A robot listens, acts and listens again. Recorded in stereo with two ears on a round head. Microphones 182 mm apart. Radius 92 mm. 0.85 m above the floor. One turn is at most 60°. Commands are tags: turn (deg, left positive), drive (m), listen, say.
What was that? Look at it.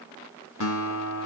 <turn deg="60"/>
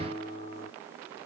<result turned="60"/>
<turn deg="25"/>
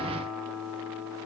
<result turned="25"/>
<say>Found it: a guitar, straight ahead, 2 to 4 m away.</say>